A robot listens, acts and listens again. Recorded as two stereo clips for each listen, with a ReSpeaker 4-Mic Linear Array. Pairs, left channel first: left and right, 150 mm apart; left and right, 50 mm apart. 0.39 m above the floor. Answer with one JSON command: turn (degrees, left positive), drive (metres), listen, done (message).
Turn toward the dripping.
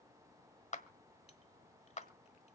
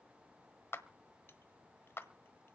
{"listen": true}
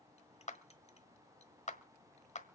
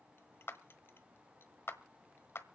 {"listen": true}
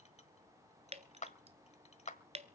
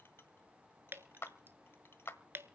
{"turn": -45}
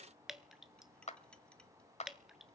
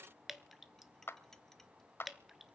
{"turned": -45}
{"done": "Found it: dripping, straight ahead."}